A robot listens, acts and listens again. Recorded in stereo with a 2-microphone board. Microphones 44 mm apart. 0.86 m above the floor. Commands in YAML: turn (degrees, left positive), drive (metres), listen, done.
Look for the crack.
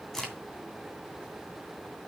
turn: 30
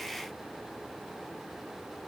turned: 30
listen: true
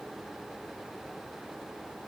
done: "I heard a crack, but can't make it out now. It was about 20° right or 140° left."